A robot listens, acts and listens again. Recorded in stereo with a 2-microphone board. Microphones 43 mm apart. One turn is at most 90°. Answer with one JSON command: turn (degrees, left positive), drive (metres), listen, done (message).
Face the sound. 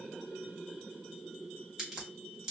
{"turn": -15}
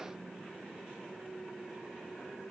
{"listen": true}
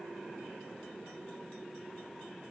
{"done": "I heard a crack, but can't make it out now. It was about straight ahead or 150° right."}